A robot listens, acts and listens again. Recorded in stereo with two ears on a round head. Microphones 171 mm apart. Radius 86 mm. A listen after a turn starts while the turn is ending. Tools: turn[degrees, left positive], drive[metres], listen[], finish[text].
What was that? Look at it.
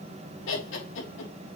Thought: The laughter: about 75° left or 105° left.
Action: turn[75]
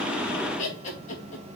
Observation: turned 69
Thought: So it is at 40° left.
Action: turn[40]
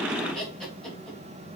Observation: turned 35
Action: finish[Facing the laughter.]